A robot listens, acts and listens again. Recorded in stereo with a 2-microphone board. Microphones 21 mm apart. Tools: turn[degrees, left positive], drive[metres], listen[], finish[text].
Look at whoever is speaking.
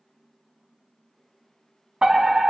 Action: listen[]
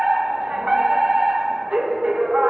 Action: listen[]
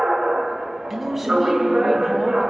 Action: turn[-30]
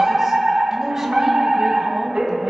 Action: listen[]
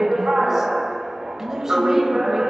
Thought: So it is at 160° right.
Action: turn[-160]
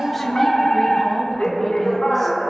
Action: finish[Facing the man speaking.]